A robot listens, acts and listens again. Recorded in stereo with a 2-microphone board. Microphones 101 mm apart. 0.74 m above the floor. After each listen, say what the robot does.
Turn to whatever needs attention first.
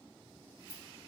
Keep listening.
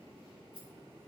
Keep listening.
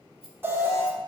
Turn 20° right.
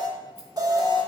Turn 140° right.
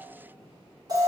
Turn 40° right.
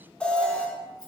Turn 10° left.
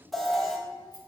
Found it: an alarm, straight ahead, under 1 m away.